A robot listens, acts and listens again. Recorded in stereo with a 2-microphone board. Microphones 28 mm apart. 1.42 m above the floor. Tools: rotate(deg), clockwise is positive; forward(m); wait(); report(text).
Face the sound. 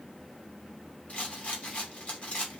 rotate(-50)
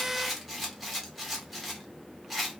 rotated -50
report("Facing the rattle, 1 to 2 m away.")